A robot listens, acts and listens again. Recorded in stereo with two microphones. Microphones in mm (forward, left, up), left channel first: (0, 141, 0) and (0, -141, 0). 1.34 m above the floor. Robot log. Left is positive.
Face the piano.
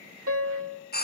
note: The piano: about 55° right or 125° right.
cmd yaw -55
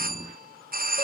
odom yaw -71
cmd idle
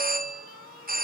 cmd idle
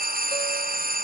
end: I heard a piano, but can't make it out now. It was about 15° left or 55° right.